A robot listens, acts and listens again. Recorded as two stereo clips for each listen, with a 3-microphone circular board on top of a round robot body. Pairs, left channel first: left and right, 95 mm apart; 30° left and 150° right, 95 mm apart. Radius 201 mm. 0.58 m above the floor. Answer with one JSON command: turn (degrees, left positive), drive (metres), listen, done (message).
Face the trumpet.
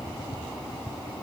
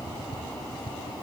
{"listen": true}
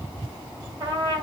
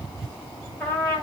{"turn": -45}
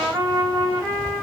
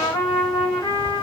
{"turn": -20}
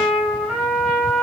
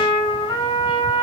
{"done": "Found it: a trumpet, straight ahead, 2 to 4 m away."}